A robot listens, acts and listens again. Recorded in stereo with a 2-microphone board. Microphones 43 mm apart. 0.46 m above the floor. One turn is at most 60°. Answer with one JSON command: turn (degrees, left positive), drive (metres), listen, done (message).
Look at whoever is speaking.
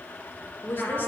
{"turn": 55}
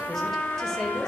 {"listen": true}
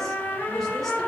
{"listen": true}
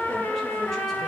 {"done": "I heard a woman speaking, but can't make it out now. It was about straight ahead or 70° left."}